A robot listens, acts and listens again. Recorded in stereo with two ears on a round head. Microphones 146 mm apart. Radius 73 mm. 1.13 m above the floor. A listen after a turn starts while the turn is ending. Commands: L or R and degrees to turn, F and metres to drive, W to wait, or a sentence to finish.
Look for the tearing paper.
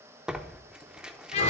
R30
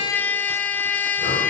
W
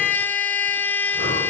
W
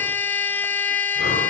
I heard tearing paper, but can't make it out now. It was about 25° left or 145° right.